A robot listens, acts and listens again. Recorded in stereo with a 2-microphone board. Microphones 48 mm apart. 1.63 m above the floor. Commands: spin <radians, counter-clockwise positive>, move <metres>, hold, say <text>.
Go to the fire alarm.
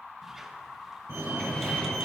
spin -1.13
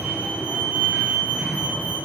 spin -0.61
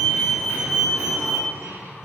spin -0.26
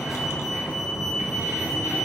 move 1.0
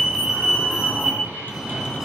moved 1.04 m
spin -0.26
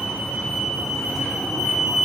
move 1.0
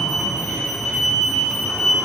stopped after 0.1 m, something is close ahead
say Arrived at the fire alarm, straight ahead.